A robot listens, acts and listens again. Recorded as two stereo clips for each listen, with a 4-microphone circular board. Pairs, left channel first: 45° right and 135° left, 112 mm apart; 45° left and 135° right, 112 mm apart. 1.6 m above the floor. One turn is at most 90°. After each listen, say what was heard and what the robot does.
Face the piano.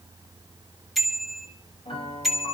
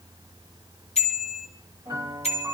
The piano: 80° right. Turn 80° right.
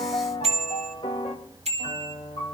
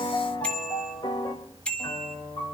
Facing the piano.